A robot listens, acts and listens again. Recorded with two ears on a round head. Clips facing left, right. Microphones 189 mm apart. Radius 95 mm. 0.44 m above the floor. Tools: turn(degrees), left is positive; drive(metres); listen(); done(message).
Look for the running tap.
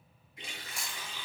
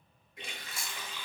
turn(degrees=-50)
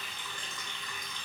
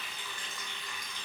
done("Facing the running tap, under 1 m away.")